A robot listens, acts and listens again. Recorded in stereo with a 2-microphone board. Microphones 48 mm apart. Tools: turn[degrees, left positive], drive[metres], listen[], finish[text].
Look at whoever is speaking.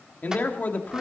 Thought: The man speaking: about 40° left or 140° left.
Action: turn[40]
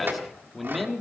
Action: finish[Facing the man speaking.]